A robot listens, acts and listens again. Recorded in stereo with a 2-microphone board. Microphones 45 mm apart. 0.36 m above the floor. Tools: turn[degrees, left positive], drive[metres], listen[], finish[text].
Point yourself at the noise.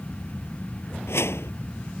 Action: turn[90]
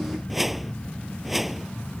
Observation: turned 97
Action: finish[Facing the whoosh.]